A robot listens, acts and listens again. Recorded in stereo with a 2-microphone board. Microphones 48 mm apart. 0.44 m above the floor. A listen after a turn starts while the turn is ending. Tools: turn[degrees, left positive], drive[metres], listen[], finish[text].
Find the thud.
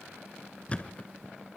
Thought: The thud: about 25° left or 155° left.
Action: turn[25]
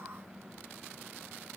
Action: listen[]
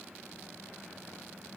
Action: finish[I heard a thud, but can't make it out now. It was about straight ahead or 130° left.]